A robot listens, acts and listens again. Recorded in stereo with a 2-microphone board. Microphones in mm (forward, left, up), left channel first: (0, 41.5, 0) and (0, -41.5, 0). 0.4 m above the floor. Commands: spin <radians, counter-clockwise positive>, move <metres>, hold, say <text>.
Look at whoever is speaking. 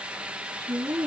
spin -0.96
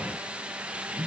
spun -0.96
hold
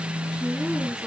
hold
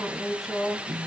say Found it: a woman speaking, straight ahead, 2 to 4 m away.